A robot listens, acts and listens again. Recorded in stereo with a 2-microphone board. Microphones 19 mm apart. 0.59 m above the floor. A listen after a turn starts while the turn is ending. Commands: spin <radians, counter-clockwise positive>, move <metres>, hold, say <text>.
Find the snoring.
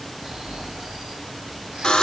spin -0.79
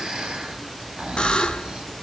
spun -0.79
spin -1.57
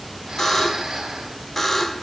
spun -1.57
spin -0.44
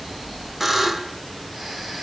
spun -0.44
say Facing the snoring.